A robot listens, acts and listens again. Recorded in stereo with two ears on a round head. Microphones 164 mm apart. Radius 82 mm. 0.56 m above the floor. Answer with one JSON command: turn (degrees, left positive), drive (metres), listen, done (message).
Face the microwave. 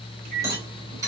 {"turn": -55}
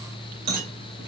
{"listen": true}
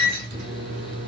{"turn": -70}
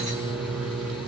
{"done": "Facing the microwave, 2 to 4 m away."}